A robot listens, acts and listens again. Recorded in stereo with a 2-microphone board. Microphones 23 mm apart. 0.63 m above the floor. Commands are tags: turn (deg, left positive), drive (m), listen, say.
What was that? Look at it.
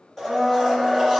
<turn deg="30"/>
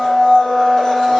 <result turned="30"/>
<turn deg="135"/>
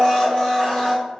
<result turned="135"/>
<turn deg="35"/>
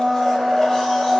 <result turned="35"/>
<turn deg="10"/>
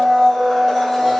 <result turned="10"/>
<say>Facing the blender, 1 to 2 m away.</say>